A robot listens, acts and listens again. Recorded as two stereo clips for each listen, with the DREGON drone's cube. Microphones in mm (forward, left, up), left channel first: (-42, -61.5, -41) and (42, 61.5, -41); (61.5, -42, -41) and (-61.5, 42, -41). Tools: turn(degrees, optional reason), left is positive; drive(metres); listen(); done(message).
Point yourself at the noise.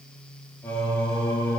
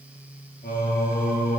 turn(degrees=-50, reason="The singing: 50° right.")
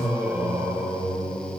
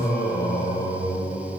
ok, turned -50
turn(degrees=-20, reason="The singing is now 20° right.")
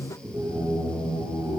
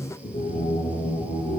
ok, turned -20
done("Found it: singing, straight ahead, 2 to 4 m away.")